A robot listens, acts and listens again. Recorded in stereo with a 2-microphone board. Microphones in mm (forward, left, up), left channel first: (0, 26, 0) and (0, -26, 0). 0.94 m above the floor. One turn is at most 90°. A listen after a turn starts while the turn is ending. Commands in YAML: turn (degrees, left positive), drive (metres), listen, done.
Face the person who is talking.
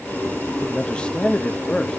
turn: 20
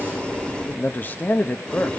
turn: 90
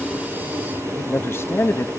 turn: 55
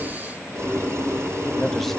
done: "Facing the man speaking, under 1 m away."